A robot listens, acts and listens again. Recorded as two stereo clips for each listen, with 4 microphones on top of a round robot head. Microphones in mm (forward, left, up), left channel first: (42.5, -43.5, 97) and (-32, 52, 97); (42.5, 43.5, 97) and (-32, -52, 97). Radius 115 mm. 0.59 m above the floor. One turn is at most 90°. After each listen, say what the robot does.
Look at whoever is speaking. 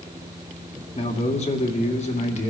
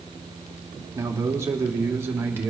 Turn 55° right.
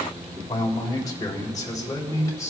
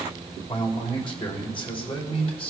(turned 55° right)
Turn 10° left.
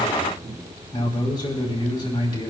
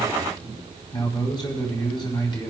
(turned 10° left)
Facing the man speaking, over 4 m away.